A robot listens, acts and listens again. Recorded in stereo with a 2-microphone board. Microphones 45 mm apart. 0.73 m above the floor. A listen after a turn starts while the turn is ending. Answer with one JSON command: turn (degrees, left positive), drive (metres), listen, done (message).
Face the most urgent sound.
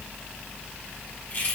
{"listen": true}
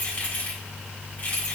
{"listen": true}
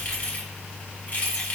{"done": "I can't make out anything urgent to turn to."}